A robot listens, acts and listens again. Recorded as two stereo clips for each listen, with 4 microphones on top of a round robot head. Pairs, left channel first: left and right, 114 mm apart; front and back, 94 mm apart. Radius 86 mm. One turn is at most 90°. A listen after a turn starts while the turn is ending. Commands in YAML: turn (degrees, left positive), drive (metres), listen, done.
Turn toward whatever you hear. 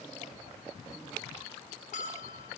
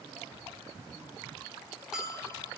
turn: 90
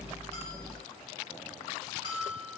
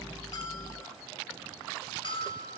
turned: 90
turn: 30
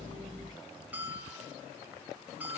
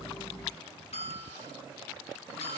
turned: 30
turn: -10
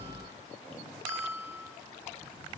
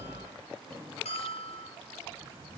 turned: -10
done: "Found it: a bell, straight ahead."